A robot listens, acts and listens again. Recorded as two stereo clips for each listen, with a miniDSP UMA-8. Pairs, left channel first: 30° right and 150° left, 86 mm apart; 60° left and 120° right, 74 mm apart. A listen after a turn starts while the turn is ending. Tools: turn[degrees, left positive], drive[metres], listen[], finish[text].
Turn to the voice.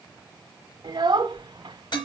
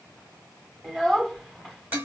Thought: The child speaking: 160° left.
Action: turn[160]
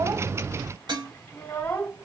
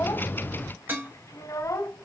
Thought: The child speaking is now 35° left.
Action: turn[35]
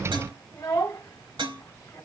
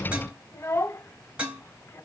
Thought: The child speaking is now 25° left.
Action: turn[25]
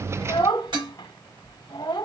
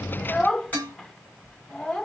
Thought: The child speaking is now 15° right.
Action: turn[-15]
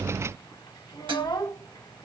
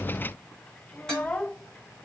Action: finish[Facing the child speaking, under 1 m away.]